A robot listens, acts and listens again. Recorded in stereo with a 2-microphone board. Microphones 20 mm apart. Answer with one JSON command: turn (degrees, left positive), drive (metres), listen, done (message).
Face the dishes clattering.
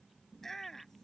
{"listen": true}
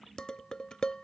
{"turn": 40}
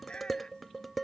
{"done": "Found it: dishes clattering, straight ahead."}